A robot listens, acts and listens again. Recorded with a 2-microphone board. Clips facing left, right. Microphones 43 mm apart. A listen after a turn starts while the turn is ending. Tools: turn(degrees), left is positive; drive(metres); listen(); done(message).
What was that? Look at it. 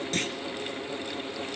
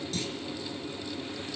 turn(degrees=55)
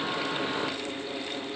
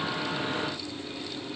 listen()
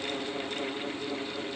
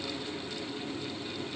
done("I heard a clunk, but can't make it out now. It was about straight ahead or 70° left.")